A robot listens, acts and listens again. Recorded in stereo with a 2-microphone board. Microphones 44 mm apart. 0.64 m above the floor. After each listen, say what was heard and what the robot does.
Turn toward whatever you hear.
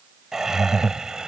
The laughter: about 15° right or 165° right. Turn 15° right.
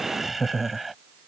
Turn 30° right.
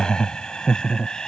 So it is at 15° left. Turn 15° left.
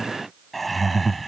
Facing the laughter.